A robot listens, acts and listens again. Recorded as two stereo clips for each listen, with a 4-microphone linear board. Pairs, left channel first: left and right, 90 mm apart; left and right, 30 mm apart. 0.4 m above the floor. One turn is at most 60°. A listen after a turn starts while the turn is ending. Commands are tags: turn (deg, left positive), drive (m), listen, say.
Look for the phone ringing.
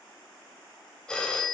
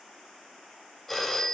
<turn deg="30"/>
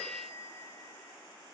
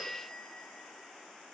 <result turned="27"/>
<listen/>
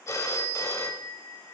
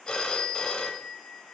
<turn deg="60"/>
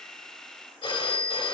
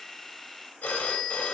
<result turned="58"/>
<turn deg="60"/>
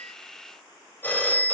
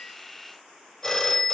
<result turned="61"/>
<turn deg="25"/>
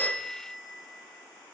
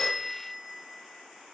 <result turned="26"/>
<say>Facing the phone ringing, under 1 m away.</say>